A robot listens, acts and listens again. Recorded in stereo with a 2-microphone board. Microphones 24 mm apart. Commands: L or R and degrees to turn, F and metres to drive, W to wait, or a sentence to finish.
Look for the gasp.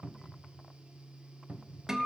W
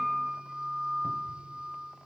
W
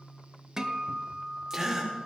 R25
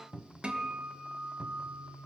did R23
W
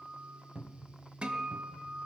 I heard a gasp, but can't make it out now. It was about 5° right or 130° right.